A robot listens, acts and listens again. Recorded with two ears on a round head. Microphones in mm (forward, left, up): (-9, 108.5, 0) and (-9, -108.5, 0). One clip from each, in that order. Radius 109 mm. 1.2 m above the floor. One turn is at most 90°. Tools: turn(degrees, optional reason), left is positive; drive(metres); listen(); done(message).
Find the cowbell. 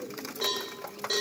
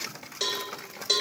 turn(degrees=-55, reason="The cowbell: about 55° right or 125° right.")
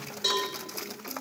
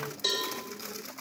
done("Facing the cowbell.")